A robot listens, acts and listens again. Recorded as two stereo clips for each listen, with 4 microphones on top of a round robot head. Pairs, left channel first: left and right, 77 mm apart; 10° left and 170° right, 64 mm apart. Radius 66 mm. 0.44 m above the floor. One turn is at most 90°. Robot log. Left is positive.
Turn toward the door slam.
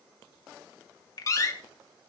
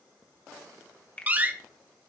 note: The door slam: 130° left.
cmd yaw +90
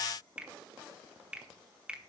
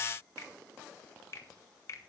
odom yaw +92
note: Nothing new. It was at 35° left.
cmd yaw +35
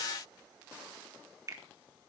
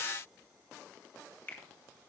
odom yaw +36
end: Facing where the door slam came from. I can't hear it now.